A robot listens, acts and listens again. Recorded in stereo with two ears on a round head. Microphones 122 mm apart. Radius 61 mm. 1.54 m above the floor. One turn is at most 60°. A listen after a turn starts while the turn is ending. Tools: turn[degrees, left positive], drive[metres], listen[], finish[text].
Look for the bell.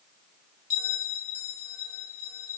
Thought: The bell: about 50° left or 130° left.
Action: turn[50]
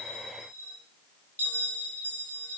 Thought: So it is at 10° left.
Action: turn[10]
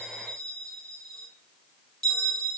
Action: finish[Facing the bell.]